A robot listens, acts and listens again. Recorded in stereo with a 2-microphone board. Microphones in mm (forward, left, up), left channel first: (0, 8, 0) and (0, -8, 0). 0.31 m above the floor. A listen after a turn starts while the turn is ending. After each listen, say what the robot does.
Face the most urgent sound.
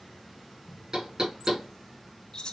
Keep listening.
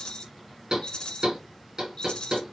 Keep listening.
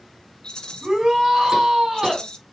Turn 60° right.
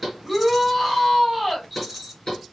Turn 10° right.
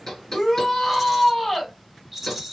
Found it: a shout, straight ahead.